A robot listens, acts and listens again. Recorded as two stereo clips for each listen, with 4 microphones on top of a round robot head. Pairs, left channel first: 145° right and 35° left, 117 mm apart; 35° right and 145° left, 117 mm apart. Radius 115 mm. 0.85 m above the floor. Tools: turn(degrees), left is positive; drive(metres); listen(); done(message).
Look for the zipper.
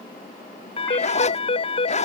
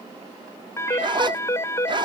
turn(degrees=-165)
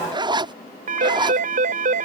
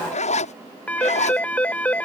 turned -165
turn(degrees=-15)
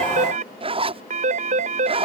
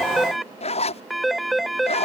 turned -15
done("Facing the zipper.")